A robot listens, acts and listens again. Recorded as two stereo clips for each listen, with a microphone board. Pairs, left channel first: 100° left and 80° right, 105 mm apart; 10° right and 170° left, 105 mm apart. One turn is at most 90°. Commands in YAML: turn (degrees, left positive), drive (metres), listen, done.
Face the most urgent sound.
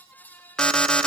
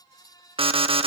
turn: -90
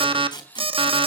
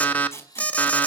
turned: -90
turn: -85
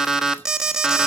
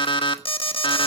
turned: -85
done: "Facing the alarm, 1 to 2 m away."